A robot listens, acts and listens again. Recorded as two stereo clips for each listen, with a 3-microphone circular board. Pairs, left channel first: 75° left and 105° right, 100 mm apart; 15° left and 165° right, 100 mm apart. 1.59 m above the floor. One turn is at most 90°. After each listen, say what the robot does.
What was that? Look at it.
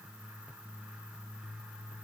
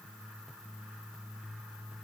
Keep listening.
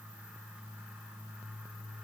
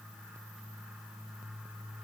Keep listening.
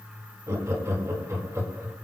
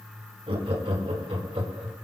Turn 90° right.
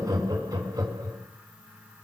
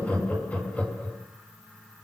Turn 60° right.
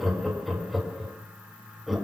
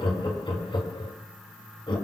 Turn 15° right.
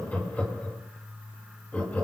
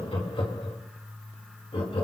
Found it: laughter, straight ahead.